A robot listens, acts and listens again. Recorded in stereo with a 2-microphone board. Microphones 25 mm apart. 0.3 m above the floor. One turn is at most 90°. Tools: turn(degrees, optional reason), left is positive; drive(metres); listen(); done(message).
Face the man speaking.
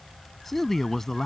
turn(degrees=30)
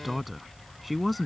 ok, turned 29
done("Found it: a man speaking, straight ahead.")